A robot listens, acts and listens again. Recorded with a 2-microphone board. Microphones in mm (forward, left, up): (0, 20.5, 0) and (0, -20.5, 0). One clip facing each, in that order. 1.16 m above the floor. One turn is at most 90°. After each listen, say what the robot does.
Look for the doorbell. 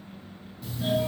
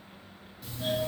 Turn 30° left.
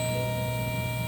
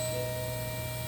Turn 90° left.
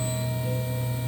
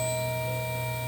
Turn 40° left.
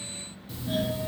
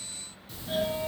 Found it: a doorbell, straight ahead, 1 to 2 m away.